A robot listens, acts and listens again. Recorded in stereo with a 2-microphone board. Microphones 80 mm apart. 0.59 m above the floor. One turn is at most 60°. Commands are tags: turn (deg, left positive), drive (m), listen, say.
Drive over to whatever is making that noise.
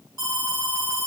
<turn deg="-45"/>
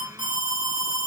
<turn deg="-60"/>
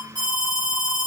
<turn deg="-60"/>
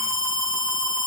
<turn deg="20"/>
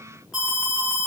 <drive m="1.0"/>
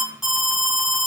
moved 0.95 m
<drive m="1.0"/>
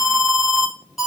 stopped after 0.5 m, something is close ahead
<say>Arrived at the alarm, straight ahead.</say>